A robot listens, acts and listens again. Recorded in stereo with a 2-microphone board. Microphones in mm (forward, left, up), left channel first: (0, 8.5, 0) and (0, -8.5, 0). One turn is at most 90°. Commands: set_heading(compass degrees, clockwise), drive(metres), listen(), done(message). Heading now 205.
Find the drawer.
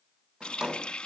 set_heading(270)
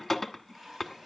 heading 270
listen()
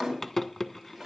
done("Found it: a drawer, straight ahead.")